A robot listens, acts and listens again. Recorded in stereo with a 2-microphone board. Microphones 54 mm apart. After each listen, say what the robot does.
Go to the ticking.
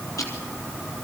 Turn 90° left.
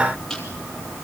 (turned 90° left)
Turn 10° left.
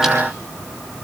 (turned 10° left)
Keep listening.
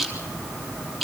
Drive 1.0 m forward.
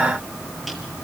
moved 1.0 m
Keep listening.
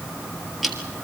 Drive 1.0 m forward.
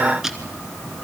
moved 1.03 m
Drive 1.0 m forward.
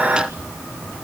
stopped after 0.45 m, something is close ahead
Keep listening.
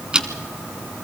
Turn 15° right.
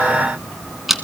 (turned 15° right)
I am next to the ticking.